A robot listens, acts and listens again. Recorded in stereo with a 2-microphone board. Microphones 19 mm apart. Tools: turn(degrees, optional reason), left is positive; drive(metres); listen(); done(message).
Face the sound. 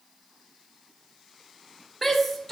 turn(degrees=30)
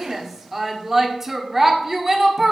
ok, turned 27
turn(degrees=-20, reason="So it is at 20° right.")
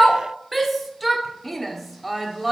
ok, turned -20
done("Found it: a shout, straight ahead.")